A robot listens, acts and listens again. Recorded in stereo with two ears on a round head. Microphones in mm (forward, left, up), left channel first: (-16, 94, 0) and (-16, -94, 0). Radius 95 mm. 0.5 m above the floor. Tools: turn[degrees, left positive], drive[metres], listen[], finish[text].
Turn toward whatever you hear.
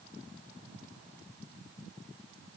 Action: listen[]
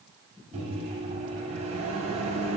Thought: The microwave: about 35° right or 145° right.
Action: turn[-35]
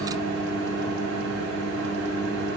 Thought: So it is at 115° right.
Action: turn[-115]
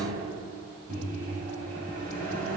Thought: The microwave is now 40° right.
Action: turn[-40]
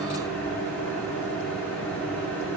Thought: The microwave is now 10° left.
Action: turn[10]
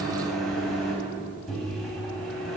Action: finish[Facing the microwave.]